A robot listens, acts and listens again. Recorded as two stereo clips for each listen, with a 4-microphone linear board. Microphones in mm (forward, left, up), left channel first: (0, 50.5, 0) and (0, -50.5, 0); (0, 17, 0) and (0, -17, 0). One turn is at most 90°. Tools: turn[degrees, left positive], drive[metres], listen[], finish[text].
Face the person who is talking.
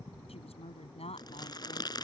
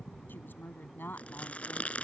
Action: turn[90]
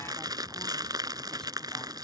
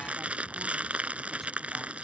Action: listen[]
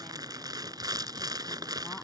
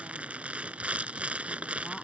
Action: listen[]
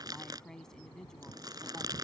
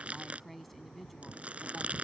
Action: finish[Facing the woman speaking.]